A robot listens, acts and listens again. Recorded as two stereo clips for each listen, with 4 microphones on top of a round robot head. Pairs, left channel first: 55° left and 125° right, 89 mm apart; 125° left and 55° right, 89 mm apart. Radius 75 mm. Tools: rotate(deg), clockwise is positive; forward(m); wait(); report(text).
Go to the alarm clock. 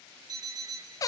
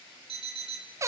rotate(75)
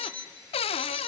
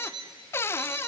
rotate(15)
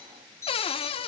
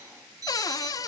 forward(1.0)
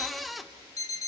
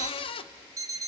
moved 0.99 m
forward(1.0)
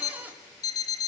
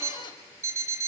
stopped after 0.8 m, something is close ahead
report("I am next to the alarm clock.")